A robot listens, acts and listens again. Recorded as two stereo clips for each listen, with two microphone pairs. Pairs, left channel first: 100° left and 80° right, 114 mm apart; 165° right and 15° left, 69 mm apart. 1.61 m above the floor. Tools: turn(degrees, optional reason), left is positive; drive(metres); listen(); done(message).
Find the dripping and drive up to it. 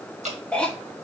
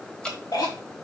turn(degrees=-90, reason="The dripping: 90° right.")
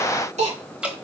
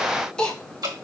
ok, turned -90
drive(metres=1.0)
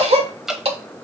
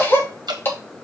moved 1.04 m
drive(metres=1.0)
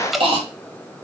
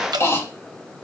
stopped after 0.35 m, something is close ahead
done("I am next to the dripping.")